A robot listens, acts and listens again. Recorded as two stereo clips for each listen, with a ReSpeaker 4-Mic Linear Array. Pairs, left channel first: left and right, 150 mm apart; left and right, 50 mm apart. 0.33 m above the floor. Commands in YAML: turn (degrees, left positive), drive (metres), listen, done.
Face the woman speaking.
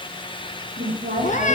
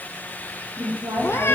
turn: -70
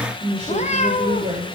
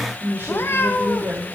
turn: -40
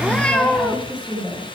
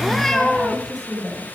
done: "Facing the woman speaking, over 4 m away."